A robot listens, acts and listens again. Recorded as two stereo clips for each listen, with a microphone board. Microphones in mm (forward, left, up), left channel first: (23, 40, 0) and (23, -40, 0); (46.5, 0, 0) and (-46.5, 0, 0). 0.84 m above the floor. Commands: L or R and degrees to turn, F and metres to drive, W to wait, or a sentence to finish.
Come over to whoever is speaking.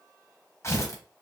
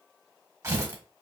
W
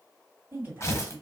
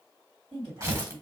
R145
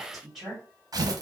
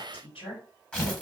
F1.0
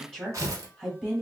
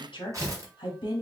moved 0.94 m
L10
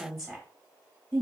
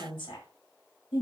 F1.0
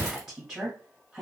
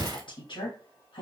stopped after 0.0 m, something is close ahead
I am next to the woman speaking.